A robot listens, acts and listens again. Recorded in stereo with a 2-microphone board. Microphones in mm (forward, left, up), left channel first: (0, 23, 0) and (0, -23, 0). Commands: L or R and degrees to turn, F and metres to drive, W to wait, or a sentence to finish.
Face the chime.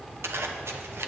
W
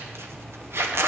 W
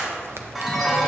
L30
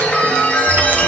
L150
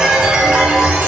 R15
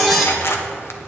Facing the chime.